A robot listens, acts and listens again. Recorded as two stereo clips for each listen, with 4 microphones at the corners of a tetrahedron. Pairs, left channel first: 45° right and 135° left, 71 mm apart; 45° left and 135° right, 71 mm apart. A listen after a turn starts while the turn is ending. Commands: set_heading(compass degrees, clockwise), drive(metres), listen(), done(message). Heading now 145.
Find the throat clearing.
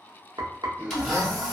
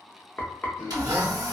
set_heading(65)
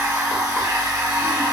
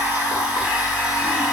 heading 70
listen()
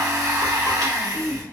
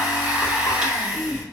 done("Facing the throat clearing, under 1 m away.")